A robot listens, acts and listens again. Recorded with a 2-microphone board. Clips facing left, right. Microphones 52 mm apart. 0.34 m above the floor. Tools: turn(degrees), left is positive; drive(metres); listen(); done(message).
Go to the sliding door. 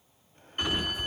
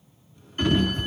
turn(degrees=30)
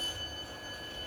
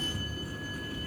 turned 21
turn(degrees=-15)
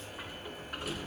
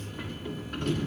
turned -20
drive(metres=1.0)
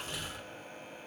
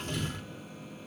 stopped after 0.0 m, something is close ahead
done("Blocked. The sliding door is further on, straight ahead.")